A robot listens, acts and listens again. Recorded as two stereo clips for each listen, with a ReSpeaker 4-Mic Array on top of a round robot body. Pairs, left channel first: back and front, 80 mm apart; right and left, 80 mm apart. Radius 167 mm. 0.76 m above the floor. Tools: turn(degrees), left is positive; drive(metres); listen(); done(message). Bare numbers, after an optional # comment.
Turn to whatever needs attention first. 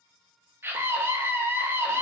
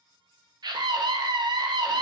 # The scream: 60° left.
turn(60)
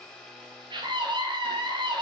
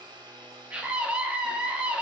# The scream is now 15° left.
turn(15)
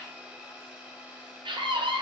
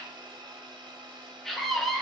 done("Found it: a scream, straight ahead, 1 to 2 m away.")